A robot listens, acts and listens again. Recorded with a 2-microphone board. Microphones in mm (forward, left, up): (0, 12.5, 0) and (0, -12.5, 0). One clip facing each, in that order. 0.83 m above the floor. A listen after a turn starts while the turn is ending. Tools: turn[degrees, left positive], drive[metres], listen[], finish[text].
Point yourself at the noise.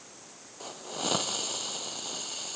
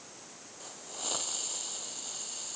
Thought: The hiss: about 25° left or 155° left.
Action: turn[25]
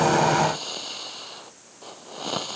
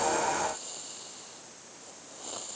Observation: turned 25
Thought: So it is at 130° left.
Action: turn[130]
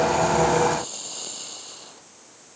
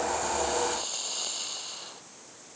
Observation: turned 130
Thought: The hiss is now 10° right.
Action: turn[-10]
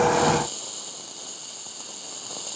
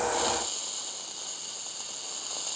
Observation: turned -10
Action: finish[Found it: a hiss, straight ahead.]